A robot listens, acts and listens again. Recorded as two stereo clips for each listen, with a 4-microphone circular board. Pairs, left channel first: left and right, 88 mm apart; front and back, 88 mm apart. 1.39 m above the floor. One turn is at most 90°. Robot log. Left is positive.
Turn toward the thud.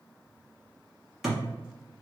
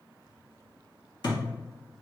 end: Found it: a thud, straight ahead.